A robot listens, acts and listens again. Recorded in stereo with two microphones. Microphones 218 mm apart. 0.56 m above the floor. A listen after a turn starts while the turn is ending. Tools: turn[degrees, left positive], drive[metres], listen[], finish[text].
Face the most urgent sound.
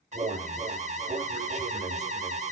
Thought: The alarm: about 30° right or 150° right.
Action: turn[-30]
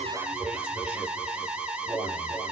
Action: finish[Found it: an alarm, straight ahead, 1 to 2 m away.]